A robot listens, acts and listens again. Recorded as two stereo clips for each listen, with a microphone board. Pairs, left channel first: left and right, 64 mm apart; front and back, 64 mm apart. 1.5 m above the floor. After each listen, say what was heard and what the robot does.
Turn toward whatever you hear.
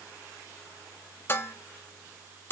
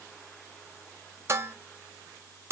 The dishes clattering: 140° left. Turn 140° left.
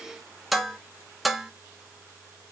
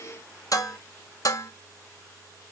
Found it: dishes clattering, straight ahead, under 1 m away.